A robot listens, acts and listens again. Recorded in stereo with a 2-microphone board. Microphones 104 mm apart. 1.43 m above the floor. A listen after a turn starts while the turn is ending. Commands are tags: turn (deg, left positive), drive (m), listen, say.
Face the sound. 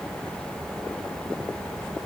<listen/>
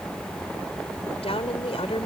<turn deg="90"/>
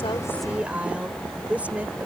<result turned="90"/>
<turn deg="-15"/>
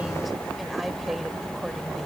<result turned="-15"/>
<say>Facing the woman speaking.</say>